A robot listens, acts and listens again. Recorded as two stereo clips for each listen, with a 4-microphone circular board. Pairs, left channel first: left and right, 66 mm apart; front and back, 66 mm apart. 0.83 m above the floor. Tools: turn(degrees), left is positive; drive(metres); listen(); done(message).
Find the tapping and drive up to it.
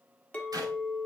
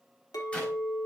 listen()
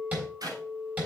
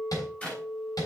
turn(degrees=-25)
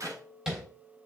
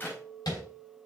turn(degrees=-10)
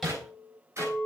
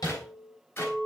drive(metres=1.0)
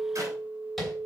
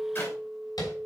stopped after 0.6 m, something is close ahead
done("Blocked. The tapping is further on, straight ahead.")